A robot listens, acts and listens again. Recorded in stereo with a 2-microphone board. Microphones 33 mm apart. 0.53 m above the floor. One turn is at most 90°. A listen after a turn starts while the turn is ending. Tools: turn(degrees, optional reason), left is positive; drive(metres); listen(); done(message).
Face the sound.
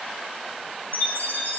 turn(degrees=60, reason="The chime: about 60° left or 120° left.")
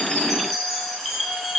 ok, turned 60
done("Facing the chime, 1 to 2 m away.")